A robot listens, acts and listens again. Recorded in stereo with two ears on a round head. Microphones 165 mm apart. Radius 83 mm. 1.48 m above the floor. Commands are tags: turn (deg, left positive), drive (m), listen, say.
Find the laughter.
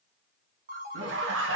<turn deg="-90"/>
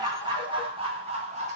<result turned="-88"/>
<turn deg="-40"/>
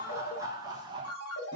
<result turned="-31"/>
<turn deg="-25"/>
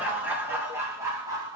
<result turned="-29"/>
<turn deg="-20"/>
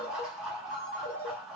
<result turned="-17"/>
<say>Facing the laughter.</say>